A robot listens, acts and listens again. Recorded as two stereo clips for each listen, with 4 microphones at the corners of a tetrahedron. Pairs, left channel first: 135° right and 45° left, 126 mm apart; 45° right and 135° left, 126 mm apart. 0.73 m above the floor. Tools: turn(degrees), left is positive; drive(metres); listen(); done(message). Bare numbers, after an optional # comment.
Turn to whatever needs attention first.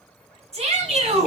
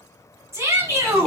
# The shout: 65° left.
turn(65)
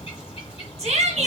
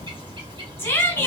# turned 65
# The shout is now 20° left.
turn(20)
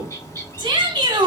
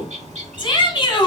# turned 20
done("Facing the shout.")